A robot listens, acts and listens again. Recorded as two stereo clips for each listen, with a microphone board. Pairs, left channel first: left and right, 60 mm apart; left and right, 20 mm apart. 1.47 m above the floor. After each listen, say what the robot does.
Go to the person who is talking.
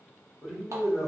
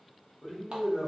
Turn 30° right.
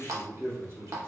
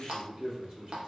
Turn 135° right.
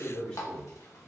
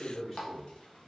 Turn 15° left.
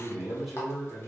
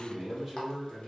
Drive 1.0 m forward.
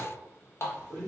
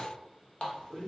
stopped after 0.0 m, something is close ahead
Something is in my way. I am facing the man speaking but have not reached it.